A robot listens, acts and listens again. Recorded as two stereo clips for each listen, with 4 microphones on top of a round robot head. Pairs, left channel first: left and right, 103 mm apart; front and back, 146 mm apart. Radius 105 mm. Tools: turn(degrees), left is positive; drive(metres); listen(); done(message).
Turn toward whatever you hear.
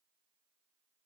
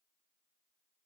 listen()
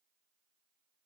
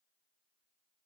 listen()
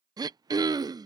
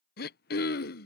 turn(degrees=-35)
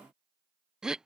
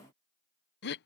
done("Facing the throat clearing.")